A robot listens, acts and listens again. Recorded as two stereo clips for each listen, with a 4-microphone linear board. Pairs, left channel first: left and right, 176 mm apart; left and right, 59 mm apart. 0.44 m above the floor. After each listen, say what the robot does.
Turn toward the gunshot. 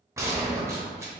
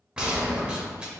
Turn 15° right.
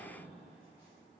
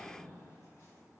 Keep listening.
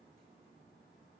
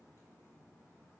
I heard a gunshot, but can't make it out now. It was about straight ahead or 150° right.